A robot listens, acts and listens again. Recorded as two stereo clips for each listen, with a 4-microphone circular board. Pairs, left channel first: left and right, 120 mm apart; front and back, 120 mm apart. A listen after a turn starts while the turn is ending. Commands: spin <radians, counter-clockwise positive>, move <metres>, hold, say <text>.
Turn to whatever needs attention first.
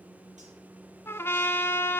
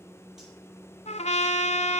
hold
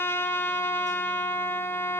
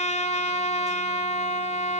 hold
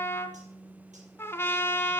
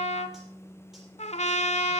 say I can't make out anything urgent to turn to.